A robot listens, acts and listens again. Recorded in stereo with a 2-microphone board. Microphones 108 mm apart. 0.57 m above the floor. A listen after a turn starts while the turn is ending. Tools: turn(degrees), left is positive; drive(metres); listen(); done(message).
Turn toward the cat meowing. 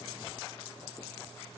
listen()
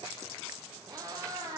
turn(degrees=-30)
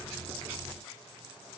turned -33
listen()
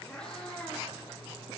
turn(degrees=10)
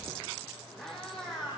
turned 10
done("Facing the cat meowing.")